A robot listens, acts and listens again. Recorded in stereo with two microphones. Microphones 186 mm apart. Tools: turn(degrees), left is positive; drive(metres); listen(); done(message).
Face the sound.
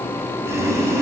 turn(degrees=-15)
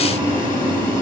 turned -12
turn(degrees=-150)
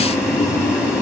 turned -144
done("Facing the boiling.")